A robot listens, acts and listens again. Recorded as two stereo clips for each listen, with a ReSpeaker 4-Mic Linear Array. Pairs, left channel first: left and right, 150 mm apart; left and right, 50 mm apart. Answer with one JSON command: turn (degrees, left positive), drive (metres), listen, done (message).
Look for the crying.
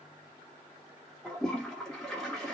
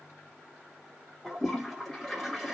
{"listen": true}
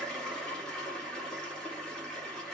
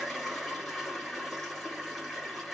{"listen": true}
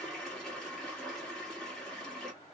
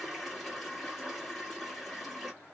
{"done": "I can't make out crying, only a toilet flushing."}